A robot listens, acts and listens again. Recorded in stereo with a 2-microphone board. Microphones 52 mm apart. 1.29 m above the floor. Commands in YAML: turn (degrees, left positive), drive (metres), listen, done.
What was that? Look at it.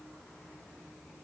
listen: true
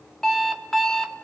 turn: 30
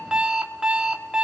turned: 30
turn: -20
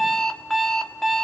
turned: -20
done: "Facing the alarm clock, 1 to 2 m away."